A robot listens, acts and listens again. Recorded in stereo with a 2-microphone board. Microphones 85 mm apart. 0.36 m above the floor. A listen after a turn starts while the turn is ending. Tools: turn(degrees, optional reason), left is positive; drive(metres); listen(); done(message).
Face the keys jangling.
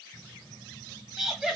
turn(degrees=-70, reason="The keys jangling: about 70° right or 110° right.")
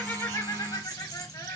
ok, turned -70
turn(degrees=-35, reason="So it is at 35° right.")
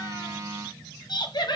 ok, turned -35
turn(degrees=-20, reason="The keys jangling is now 20° right.")
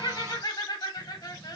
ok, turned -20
listen()
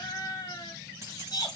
turn(degrees=-35, reason="The keys jangling is now 35° right.")
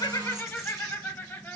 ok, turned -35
listen()
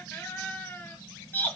listen()
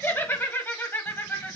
done("Facing where the keys jangling came from. I can't hear it now.")